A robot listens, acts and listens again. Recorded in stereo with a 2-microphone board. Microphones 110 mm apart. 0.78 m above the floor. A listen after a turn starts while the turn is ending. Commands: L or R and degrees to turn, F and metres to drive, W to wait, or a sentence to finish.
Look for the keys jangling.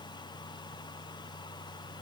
W
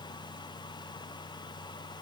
W
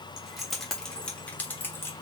L20
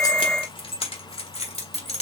L110
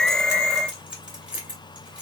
R10
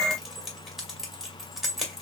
Found it: keys jangling, straight ahead.